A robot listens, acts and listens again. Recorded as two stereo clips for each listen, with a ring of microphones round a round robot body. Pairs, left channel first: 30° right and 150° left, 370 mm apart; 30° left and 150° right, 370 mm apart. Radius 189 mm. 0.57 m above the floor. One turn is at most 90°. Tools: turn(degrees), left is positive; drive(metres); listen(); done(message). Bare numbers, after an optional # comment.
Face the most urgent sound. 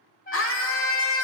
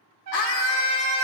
# The scream: 25° left.
turn(25)
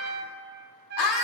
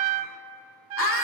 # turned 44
# The scream is now 25° right.
turn(-25)
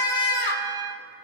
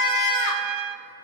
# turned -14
done("Found it: a scream, straight ahead, 1 to 2 m away.")